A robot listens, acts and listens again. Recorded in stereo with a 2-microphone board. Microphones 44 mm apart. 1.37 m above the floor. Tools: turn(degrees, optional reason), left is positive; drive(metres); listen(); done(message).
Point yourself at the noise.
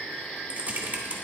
turn(degrees=-30, reason="The typing on a keyboard: about 30° right or 150° right.")
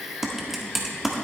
done("Found it: typing on a keyboard, straight ahead, 1 to 2 m away.")